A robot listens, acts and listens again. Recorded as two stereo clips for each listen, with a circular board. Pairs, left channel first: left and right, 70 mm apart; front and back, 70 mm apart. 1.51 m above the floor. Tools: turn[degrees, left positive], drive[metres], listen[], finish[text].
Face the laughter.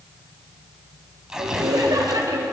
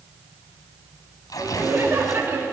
Thought: The laughter: 125° right.
Action: turn[-125]
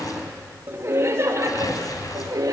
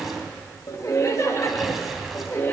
Thought: The laughter is now 55° right.
Action: turn[-55]
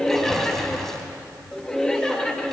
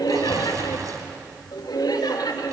Thought: The laughter is now 10° left.
Action: turn[10]
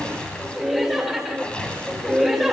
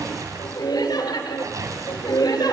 Action: finish[Found it: laughter, straight ahead.]